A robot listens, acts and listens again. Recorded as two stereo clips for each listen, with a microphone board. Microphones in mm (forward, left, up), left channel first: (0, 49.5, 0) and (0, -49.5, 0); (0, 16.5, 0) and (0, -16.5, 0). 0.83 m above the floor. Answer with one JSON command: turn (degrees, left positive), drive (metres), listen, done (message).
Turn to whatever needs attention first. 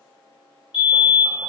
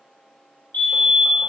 {"turn": 55}
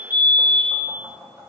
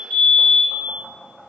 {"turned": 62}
{"turn": 45}
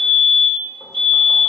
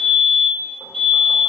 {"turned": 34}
{"turn": 10}
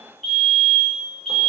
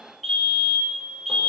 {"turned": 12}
{"done": "Found it: a fire alarm, straight ahead."}